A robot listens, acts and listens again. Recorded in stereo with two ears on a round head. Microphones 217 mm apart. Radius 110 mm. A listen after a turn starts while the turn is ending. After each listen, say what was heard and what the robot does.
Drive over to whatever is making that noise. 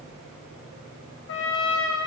The trumpet: about 60° left or 120° left. Turn 60° left.
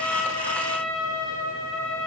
So it is at 60° left. Turn 60° left.
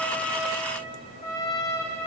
The trumpet is now 15° left. Turn 15° left.
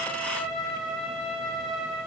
Drive 1.0 m forward.
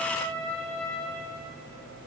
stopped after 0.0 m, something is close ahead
Something is in my way. I am facing the trumpet but have not reached it.